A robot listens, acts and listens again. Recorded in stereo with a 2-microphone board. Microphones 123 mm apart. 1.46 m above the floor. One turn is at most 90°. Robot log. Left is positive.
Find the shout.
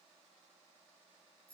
cmd idle
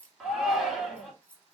cmd yaw +30
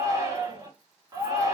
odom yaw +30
note: So it is at 30° right.
cmd yaw -30
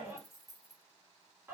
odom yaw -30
note: The shout is now 15° right.
cmd yaw -15
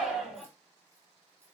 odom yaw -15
end: Facing the shout, 2 to 4 m away.